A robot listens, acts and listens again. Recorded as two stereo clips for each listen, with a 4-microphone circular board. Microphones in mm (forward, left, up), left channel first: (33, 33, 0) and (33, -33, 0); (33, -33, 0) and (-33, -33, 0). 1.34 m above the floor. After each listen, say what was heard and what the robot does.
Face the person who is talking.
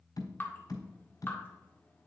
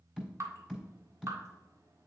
Keep listening.
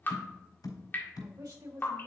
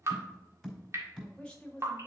The woman speaking: 75° right. Turn 75° right.
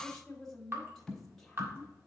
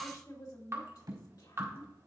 Found it: a woman speaking, straight ahead, 2 to 4 m away.